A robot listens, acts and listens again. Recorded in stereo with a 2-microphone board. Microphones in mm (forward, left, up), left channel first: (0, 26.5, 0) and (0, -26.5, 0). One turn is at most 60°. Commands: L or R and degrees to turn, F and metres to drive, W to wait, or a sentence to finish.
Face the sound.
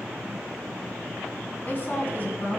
L40
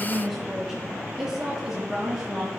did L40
R10
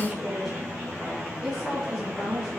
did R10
Found it: a woman speaking, straight ahead.